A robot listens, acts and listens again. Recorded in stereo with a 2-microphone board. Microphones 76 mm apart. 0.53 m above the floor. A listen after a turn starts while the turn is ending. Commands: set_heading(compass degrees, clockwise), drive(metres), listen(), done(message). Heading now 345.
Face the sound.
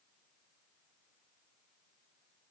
listen()
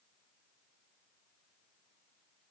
listen()
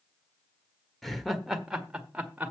set_heading(5)
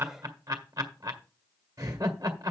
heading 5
set_heading(145)
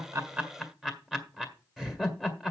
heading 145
done("Found it: laughter, straight ahead, 1 to 2 m away.")